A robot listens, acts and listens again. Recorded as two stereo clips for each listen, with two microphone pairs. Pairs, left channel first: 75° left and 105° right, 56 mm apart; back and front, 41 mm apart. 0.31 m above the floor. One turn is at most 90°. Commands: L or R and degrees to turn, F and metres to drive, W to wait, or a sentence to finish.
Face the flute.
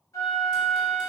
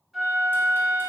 L85
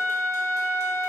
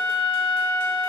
Found it: a flute, straight ahead, 1 to 2 m away.